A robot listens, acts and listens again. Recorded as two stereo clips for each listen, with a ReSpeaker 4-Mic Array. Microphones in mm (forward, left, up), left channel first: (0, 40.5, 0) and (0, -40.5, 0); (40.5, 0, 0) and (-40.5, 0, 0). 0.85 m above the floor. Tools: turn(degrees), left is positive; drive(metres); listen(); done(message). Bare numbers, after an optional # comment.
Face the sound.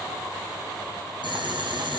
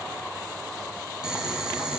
# The boiling: 95° right.
turn(-95)
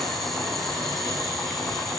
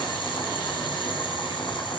done("Found it: boiling, straight ahead, over 4 m away.")